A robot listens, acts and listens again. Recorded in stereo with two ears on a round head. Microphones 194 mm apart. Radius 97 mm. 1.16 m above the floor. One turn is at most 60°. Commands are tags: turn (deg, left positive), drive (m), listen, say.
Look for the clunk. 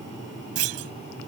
<turn deg="-60"/>
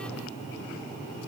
<turn deg="-30"/>
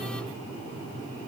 <say>I heard a clunk from this way, but can't make it out now.</say>